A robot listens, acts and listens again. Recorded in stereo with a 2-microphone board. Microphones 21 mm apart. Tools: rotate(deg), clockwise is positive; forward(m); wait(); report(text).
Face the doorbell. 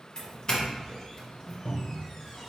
rotate(-30)
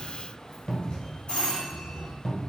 rotate(-120)
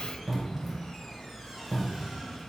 wait()
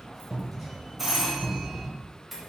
report("Found it: a doorbell, straight ahead.")